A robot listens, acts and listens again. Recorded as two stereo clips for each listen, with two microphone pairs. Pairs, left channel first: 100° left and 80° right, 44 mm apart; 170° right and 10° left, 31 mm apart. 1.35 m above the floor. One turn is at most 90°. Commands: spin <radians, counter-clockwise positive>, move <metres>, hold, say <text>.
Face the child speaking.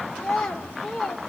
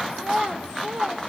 spin 0.26
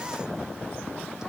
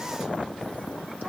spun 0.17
hold
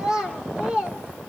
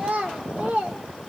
spin -0.17
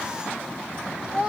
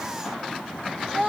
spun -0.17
spin -0.26
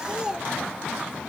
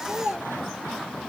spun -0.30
say Found it: a child speaking, straight ahead.